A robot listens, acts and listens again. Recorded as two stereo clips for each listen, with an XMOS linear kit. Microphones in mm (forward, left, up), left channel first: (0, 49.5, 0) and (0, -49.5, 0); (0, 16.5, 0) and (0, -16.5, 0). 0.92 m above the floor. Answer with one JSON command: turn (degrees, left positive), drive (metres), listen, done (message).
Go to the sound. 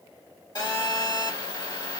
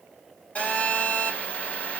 {"turn": 45}
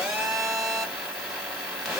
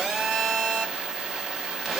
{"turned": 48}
{"drive": 1.0}
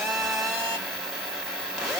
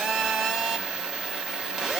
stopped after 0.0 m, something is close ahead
{"done": "Something is in my way. I am facing the phone buzzing but have not reached it."}